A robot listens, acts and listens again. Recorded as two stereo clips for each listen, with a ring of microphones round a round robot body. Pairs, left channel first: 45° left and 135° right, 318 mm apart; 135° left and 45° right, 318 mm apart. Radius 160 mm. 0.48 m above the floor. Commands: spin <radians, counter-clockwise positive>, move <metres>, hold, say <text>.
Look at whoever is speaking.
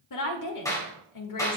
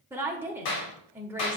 spin 0.70
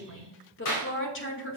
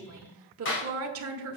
say Facing the woman speaking, 1 to 2 m away.